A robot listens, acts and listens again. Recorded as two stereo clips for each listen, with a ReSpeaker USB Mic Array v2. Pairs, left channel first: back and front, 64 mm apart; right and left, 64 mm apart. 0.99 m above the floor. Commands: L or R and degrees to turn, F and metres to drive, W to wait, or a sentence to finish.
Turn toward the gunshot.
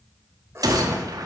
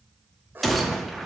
Found it: a gunshot, straight ahead, under 1 m away.